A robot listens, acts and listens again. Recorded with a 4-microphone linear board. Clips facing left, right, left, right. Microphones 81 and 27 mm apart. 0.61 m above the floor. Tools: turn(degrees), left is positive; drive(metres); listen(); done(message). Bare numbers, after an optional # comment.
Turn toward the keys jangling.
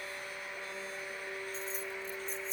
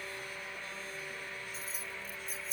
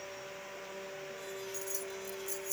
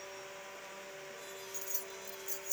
turn(-30)
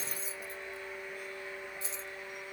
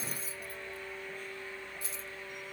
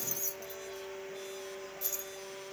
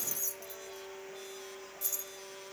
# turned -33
# So it is at 25° left.
turn(25)
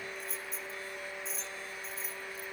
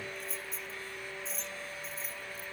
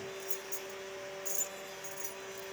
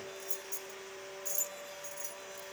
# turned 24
done("Found it: keys jangling, straight ahead.")